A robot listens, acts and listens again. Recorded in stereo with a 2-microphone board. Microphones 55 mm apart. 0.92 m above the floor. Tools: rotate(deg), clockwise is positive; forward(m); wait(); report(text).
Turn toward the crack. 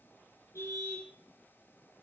wait()
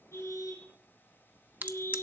rotate(35)
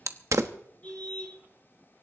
rotate(110)
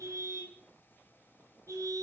report("I heard a crack from this way, but can't make it out now.")